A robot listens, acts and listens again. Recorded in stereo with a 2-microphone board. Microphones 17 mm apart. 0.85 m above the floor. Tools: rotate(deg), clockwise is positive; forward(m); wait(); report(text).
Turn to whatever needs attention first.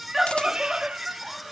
rotate(30)
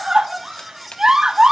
rotate(140)
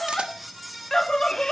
rotate(-30)
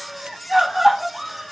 rotate(10)
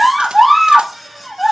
report("Found it: a scream, straight ahead, 1 to 2 m away.")